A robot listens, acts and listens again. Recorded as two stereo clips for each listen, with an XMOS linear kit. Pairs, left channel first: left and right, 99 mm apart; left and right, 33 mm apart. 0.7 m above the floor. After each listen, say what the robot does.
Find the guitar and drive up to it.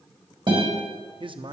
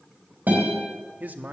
Turn 55° right.
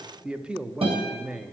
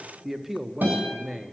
Turn 70° right.
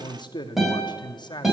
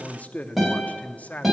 Drive 1.0 m forward.
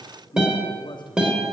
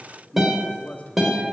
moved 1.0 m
Turn 10° right.
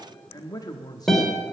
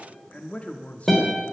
Drive 1.0 m forward.
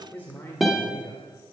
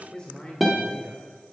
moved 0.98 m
Drive 1.0 m forward.
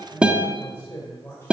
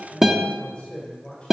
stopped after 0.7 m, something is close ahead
Turn 10° right.
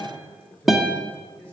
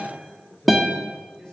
Arrived at the guitar, straight ahead.